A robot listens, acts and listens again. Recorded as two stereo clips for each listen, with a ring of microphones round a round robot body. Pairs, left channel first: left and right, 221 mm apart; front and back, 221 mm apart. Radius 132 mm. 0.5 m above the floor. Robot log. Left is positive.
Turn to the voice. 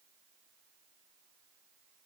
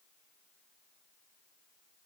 cmd idle
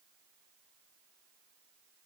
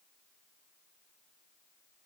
cmd idle
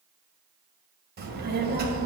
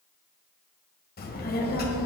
note: The child speaking: 45° right.
cmd yaw -45
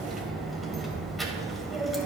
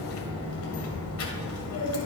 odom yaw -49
end: Found it: a child speaking, straight ahead.